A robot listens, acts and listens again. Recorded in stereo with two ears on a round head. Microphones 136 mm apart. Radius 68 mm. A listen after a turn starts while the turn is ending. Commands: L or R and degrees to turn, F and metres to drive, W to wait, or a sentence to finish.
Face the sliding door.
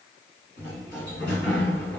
L90
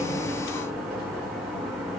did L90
Facing the sliding door.